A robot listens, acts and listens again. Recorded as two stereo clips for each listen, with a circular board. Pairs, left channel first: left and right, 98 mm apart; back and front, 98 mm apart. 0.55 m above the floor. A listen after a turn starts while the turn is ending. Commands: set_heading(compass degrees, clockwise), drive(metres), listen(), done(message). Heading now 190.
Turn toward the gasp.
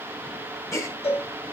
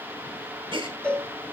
set_heading(155)
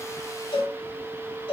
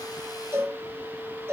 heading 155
done("Facing where the gasp came from. I can't hear it now.")